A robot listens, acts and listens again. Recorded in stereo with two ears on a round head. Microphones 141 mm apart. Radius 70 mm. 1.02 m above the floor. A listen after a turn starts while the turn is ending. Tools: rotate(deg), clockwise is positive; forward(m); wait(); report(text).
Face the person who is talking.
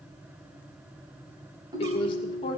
rotate(-30)
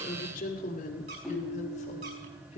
rotate(-40)
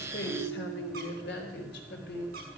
rotate(-105)
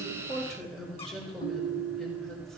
report("Found it: a woman speaking, straight ahead, over 4 m away.")